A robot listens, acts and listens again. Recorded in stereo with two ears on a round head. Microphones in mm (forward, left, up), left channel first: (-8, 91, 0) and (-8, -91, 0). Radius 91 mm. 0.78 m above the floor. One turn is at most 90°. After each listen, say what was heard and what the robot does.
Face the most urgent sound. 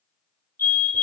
Turn 30° left.
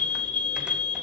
So it is at 135° left. Turn 90° left.
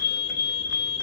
The fire alarm is now 60° left. Turn 60° left.
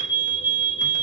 The fire alarm is now 10° right. Turn 10° right.
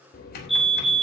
Facing the fire alarm, 2 to 4 m away.